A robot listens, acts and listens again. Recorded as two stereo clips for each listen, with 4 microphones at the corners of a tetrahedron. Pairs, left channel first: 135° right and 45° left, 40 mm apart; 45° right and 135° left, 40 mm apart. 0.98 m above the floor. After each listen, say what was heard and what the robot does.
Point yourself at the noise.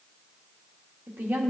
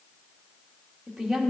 The woman speaking: 55° left. Turn 55° left.
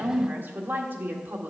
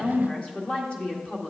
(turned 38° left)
The woman speaking is now 15° left. Turn 15° left.
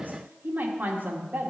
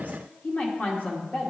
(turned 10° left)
Found it: a woman speaking, straight ahead.